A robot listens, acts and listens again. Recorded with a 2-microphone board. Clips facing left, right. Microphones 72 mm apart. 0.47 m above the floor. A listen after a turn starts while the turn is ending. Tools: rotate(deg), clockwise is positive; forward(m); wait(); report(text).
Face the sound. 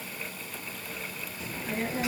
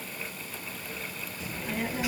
rotate(30)
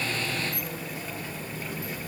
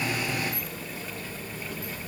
rotate(-20)
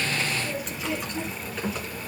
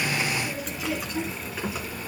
rotate(10)
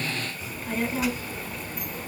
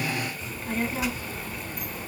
report("Found it: a child speaking, straight ahead, 2 to 4 m away.")